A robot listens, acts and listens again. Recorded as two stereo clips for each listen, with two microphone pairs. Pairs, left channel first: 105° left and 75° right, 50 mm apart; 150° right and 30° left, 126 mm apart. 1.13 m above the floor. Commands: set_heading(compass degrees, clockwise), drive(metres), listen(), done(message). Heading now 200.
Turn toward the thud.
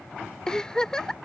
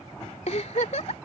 listen()
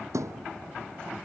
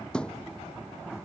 set_heading(270)
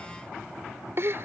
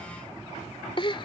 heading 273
done("I heard a thud from this way, but can't make it out now.")